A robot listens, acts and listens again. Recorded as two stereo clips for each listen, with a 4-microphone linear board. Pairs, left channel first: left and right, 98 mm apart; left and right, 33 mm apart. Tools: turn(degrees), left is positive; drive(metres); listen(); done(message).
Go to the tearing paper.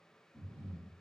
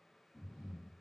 listen()
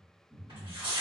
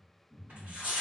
turn(degrees=-60)
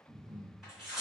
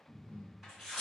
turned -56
drive(metres=1.0)
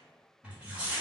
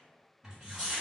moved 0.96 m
turn(degrees=-15)
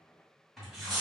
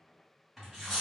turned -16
drive(metres=1.0)
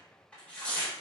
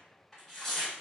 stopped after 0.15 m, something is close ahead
turn(degrees=10)
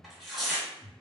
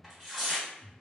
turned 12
done("Arrived at the tearing paper, straight ahead.")